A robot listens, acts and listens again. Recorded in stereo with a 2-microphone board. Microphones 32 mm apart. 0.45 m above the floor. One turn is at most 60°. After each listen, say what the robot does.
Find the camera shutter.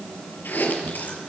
Keep listening.
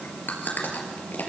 Keep listening.
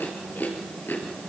I can't make out a camera shutter, only chewing.